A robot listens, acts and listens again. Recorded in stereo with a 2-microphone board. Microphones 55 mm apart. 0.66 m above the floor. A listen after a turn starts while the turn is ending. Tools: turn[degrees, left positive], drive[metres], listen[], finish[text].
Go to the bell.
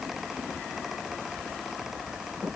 Action: listen[]
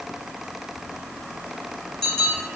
Action: turn[30]
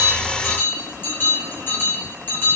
Thought: So it is at 135° left.
Action: turn[135]
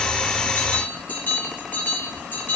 Thought: The bell is now 35° left.
Action: turn[35]
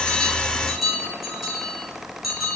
Action: drive[1.0]
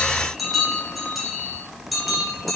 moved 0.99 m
Action: drive[1.0]
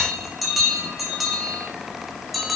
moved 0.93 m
Action: drive[1.0]
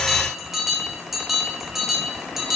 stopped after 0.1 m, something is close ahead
Action: finish[I am next to the bell.]